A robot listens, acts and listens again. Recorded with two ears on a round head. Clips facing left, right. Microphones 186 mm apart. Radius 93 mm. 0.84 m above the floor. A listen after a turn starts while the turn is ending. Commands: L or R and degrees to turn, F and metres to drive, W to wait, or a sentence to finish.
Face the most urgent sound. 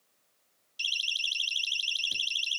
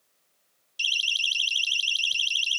R30
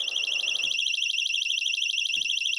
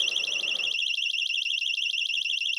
L25
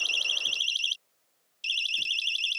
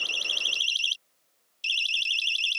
Facing the siren.